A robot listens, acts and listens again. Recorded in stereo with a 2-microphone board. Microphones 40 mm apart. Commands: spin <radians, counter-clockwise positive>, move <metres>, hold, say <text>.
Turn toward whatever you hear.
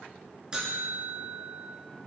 spin -0.35
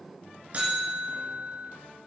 spin -2.44
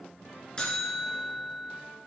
spin 0.35
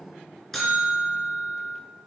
say Found it: a buzzer, straight ahead, 2 to 4 m away.